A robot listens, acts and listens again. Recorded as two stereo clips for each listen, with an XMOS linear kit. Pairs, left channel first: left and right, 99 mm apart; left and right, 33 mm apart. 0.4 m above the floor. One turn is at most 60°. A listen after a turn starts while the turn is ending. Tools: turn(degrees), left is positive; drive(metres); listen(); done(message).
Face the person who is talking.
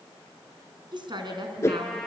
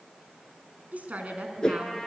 turn(degrees=-55)
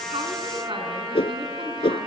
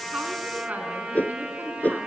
listen()
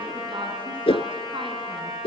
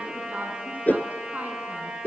turn(degrees=-60)
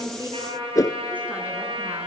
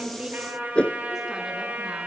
turn(degrees=-10)
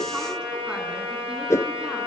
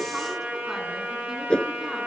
listen()
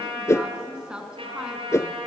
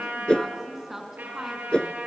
turn(degrees=-10)
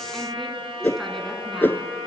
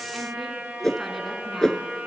listen()
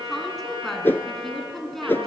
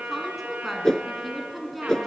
done("Facing the woman speaking.")